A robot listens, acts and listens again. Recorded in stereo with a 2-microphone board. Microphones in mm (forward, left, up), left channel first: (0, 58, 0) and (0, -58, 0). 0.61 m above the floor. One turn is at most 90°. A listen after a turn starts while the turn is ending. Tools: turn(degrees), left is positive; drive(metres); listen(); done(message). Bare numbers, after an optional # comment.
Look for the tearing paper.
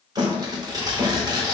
# The tearing paper: about 35° right or 145° right.
turn(-35)
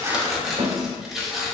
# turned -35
done("Found it: tearing paper, straight ahead, under 1 m away.")